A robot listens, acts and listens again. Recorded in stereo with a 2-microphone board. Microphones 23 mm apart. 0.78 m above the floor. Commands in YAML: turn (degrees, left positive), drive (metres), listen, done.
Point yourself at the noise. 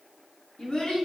turn: 60
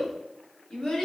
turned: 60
turn: 30
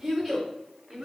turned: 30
turn: -15
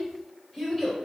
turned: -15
done: "Found it: a child speaking, straight ahead."